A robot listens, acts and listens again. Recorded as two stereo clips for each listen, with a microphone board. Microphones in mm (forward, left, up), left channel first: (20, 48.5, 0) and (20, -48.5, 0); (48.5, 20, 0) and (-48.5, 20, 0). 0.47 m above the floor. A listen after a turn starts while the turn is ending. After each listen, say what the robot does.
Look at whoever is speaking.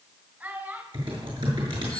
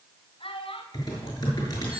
Turn 20° right.
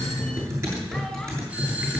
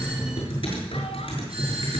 Keep listening.
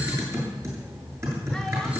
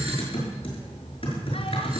Keep listening.
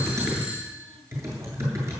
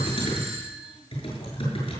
I heard a child speaking from this way, but can't make it out now.